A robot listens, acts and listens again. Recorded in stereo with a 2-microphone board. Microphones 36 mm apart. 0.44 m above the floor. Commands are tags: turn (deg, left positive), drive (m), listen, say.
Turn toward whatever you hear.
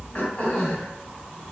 <turn deg="35"/>
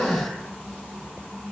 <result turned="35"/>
<turn deg="105"/>
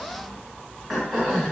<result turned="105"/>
<say>Found it: throat clearing, straight ahead.</say>